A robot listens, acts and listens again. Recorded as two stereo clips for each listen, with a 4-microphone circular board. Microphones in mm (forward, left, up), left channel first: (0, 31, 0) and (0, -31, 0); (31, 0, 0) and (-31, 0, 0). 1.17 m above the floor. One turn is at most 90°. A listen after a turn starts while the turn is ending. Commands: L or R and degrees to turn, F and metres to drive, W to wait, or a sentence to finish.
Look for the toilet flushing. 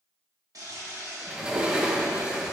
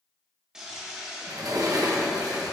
R90
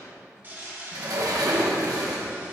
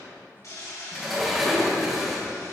R30
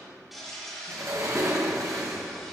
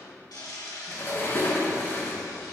Found it: a toilet flushing, straight ahead.